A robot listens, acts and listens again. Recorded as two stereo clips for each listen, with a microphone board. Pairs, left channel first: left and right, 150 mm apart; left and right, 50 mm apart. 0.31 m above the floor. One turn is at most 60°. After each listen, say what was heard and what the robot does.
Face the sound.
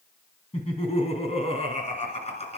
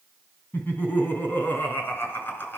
The laughter: about 50° left or 130° left. Turn 50° left.
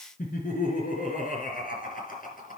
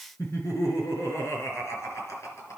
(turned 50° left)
So it is at 70° left. Turn 60° left.
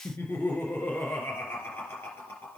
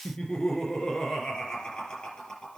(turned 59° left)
The laughter is now 15° left. Turn 15° left.
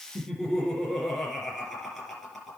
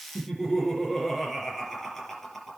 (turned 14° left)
Facing the laughter, over 4 m away.